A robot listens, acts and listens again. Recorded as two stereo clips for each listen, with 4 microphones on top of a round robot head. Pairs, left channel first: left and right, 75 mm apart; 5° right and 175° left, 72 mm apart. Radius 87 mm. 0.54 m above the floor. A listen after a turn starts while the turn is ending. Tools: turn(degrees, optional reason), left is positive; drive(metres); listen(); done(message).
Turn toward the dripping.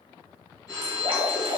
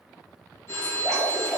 turn(degrees=-100, reason="The dripping: 100° right.")
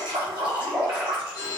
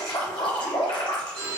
turn(degrees=-15, reason="The dripping is now 15° right.")
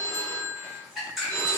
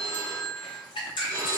done("Facing the dripping.")